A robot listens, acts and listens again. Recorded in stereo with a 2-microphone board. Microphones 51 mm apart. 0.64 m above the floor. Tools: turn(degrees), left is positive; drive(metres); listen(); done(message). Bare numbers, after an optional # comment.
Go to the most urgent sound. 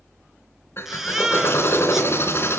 turn(-30)
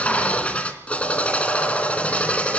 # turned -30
listen()
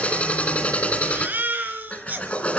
# So it is at 145° right.
turn(-145)
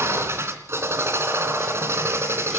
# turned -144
listen()
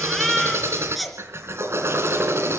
drive(1.0)
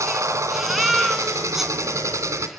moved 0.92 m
drive(1.0)
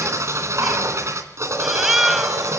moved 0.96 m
drive(1.0)
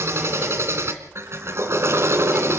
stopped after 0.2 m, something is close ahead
listen()
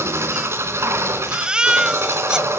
# The baby crying is now 20° right.
turn(-20)
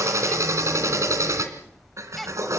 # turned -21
done("Arrived at the baby crying, straight ahead.")